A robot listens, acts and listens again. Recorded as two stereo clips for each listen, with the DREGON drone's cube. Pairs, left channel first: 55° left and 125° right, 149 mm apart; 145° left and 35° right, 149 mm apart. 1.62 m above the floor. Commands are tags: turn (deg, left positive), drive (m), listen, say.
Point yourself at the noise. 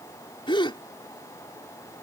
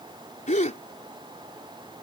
<turn deg="110"/>
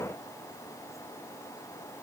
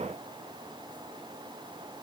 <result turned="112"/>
<say>I heard a gasp from this way, but can't make it out now.</say>